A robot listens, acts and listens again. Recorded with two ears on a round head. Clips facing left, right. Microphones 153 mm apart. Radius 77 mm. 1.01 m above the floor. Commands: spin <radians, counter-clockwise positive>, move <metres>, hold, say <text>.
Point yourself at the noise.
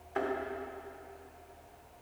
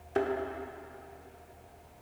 spin -0.61
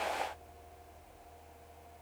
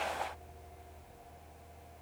hold
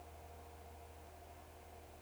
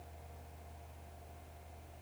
say I heard a thud, but can't make it out now. It was about straight ahead or 110° right.